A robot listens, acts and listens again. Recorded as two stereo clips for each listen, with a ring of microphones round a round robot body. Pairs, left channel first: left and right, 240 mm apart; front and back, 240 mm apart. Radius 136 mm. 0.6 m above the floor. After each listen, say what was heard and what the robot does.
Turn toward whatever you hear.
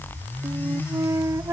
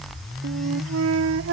The flute: 170° right. Turn 170° right.
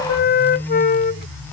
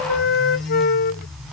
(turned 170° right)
The flute is now 45° left. Turn 45° left.
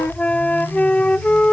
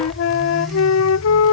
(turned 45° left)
Found it: a flute, straight ahead.